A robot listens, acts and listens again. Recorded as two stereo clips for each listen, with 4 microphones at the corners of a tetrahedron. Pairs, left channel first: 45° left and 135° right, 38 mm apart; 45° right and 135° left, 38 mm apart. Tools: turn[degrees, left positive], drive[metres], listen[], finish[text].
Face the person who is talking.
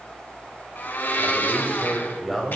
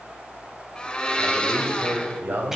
Thought: The man speaking: 140° left.
Action: turn[140]
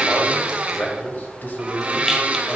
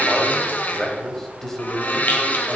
Thought: The man speaking is now 35° left.
Action: turn[35]
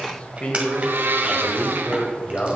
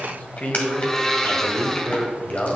Action: finish[Found it: a man speaking, straight ahead, 1 to 2 m away.]